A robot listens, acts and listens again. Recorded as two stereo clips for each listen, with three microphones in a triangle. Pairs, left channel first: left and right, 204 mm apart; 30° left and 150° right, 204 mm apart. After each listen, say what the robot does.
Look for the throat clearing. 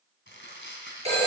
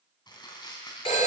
Keep listening.
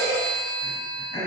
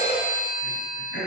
Turn 20° left.
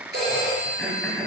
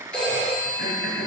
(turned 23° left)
Found it: throat clearing, straight ahead.